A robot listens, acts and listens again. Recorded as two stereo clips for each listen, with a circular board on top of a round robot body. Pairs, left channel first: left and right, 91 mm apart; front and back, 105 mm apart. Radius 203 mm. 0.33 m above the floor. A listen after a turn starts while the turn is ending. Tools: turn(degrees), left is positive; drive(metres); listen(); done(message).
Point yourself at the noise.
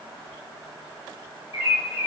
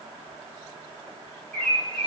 turn(degrees=80)
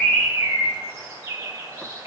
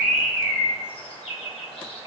turn(degrees=-25)
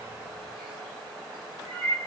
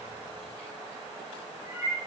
done("Found it: a bird, straight ahead.")